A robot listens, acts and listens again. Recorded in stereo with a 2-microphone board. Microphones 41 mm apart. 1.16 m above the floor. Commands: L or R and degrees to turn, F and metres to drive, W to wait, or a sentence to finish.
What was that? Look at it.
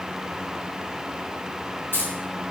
L55
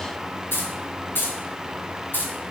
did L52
L50
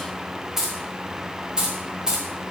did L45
R15
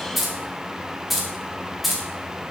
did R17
Facing the keys jangling, 1 to 2 m away.